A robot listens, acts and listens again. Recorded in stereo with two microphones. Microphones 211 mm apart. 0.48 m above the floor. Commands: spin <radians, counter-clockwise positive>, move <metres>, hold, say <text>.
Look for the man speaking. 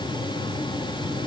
hold
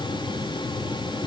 hold
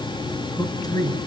spin 0.35
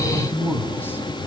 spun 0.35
spin 0.52
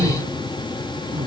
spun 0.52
hold
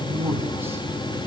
spin -0.17
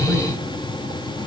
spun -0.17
hold
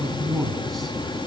say Found it: a man speaking, straight ahead.